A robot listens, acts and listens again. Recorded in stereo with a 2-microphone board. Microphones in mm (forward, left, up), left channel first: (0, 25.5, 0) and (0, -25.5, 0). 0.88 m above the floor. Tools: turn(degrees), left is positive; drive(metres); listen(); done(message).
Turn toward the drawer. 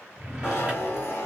turn(degrees=-30)
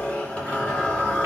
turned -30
listen()
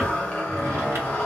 listen()
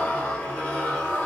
done("I heard a drawer, but can't make it out now. It was about straight ahead or 120° right.")